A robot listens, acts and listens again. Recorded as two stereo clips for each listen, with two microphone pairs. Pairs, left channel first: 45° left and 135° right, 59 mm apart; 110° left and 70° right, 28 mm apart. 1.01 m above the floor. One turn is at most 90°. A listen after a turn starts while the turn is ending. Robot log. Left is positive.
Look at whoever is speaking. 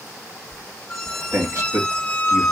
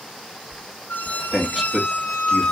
note: The man speaking: 165° right.
cmd yaw -90
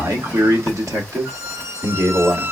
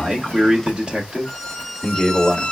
note: The man speaking is now 130° right.
cmd yaw -90
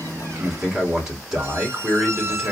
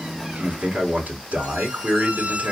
note: The man speaking is now 60° right.
cmd yaw -60
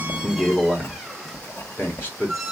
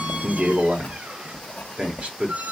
note: The man speaking is now 10° right.
cmd yaw -10
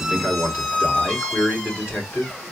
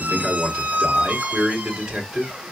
end: Found it: a man speaking, straight ahead.